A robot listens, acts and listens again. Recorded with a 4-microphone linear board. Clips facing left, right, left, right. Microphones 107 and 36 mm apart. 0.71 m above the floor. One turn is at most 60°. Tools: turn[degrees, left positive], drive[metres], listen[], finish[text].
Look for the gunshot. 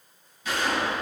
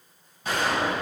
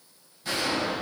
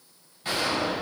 Thought: The gunshot: about 50° right or 130° right.
Action: turn[-50]
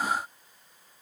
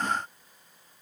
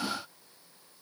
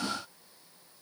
Action: listen[]
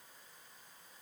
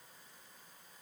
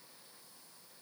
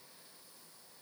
Action: finish[I heard a gunshot, but can't make it out now. It was about straight ahead or 80° right.]